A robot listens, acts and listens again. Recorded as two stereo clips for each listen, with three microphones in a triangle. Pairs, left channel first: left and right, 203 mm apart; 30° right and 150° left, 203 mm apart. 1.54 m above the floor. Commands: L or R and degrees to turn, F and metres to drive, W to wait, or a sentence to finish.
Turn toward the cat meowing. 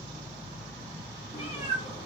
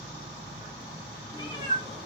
L35
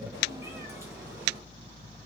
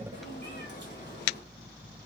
W
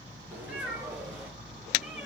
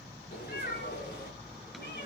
R10
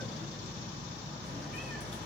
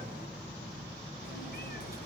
W
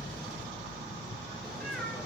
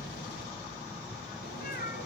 W
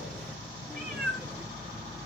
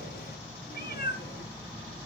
Found it: a cat meowing, straight ahead.